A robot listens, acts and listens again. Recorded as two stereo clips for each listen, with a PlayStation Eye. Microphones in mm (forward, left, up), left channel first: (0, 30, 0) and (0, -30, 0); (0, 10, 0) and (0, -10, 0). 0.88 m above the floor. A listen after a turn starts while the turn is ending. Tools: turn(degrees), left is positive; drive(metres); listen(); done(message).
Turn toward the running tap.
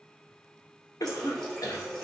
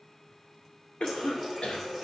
turn(degrees=30)
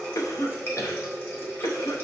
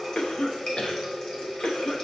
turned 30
turn(degrees=140)
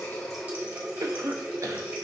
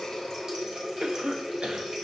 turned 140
turn(degrees=-30)
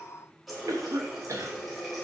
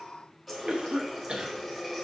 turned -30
done("Facing the running tap, 1 to 2 m away.")